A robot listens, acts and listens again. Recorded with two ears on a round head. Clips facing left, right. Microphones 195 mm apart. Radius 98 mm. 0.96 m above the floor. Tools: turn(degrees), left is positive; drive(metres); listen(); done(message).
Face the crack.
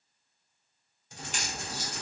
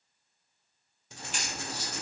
turn(degrees=40)
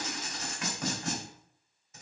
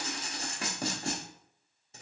listen()
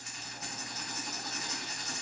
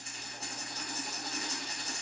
done("I heard a crack, but can't make it out now. It was about straight ahead or 100° left.")